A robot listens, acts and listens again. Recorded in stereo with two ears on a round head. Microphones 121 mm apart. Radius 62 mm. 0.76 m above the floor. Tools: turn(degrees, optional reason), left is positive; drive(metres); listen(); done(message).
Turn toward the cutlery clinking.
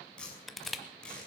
listen()
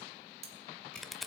turn(degrees=-50, reason="The cutlery clinking: about 50° right or 130° right.")
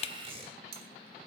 turn(degrees=-80, reason="So it is at 80° right.")
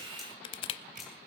listen()
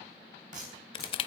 listen()
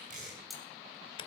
done("Found it: cutlery clinking, straight ahead, 2 to 4 m away.")